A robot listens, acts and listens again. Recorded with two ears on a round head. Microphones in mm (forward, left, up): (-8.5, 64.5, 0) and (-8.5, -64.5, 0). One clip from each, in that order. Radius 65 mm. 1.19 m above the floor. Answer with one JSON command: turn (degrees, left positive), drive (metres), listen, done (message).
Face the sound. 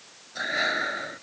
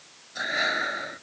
{"turn": -30}
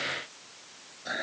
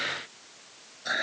{"turn": -140}
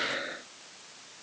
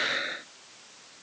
{"turn": -45}
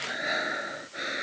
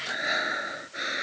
{"turn": -20}
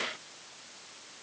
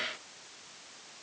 {"listen": true}
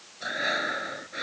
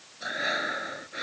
{"done": "Found it: breathing, straight ahead."}